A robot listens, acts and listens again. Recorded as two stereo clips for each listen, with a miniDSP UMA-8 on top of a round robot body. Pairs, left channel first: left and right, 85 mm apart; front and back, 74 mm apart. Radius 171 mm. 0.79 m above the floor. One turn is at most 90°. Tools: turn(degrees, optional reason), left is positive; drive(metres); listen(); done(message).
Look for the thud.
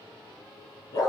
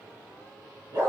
listen()
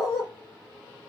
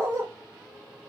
listen()
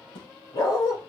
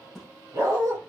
turn(degrees=85, reason="The thud: 85° left.")
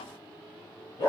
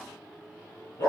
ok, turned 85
done("Facing where the thud came from. I can't hear it now.")